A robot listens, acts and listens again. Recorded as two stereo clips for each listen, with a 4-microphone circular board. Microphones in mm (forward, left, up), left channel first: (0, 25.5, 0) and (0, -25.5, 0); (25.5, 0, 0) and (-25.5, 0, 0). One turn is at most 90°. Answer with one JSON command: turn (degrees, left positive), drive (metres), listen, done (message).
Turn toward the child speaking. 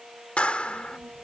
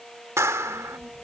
{"turn": -90}
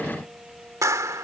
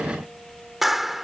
{"turn": -30}
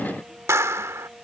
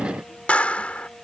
{"listen": true}
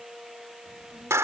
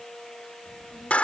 {"done": "Facing the child speaking."}